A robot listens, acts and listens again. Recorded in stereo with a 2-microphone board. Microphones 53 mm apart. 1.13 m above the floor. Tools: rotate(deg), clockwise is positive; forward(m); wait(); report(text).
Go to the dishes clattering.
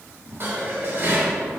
rotate(45)
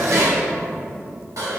rotate(85)
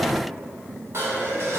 rotate(55)
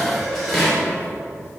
forward(1.0)
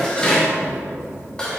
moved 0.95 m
rotate(-15)
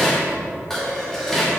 forward(1.0)
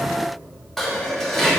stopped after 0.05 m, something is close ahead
report("Arrived at the dishes clattering, straight ahead.")